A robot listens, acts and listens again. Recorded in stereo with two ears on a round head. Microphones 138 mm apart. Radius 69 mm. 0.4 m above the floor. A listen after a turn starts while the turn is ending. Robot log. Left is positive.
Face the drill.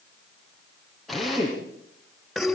cmd yaw +30
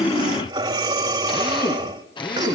note: So it is at 145° left.
cmd yaw +145
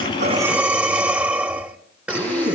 cmd idle
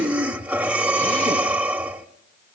cmd idle
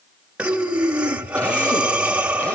end: I heard a drill from this way, but can't make it out now.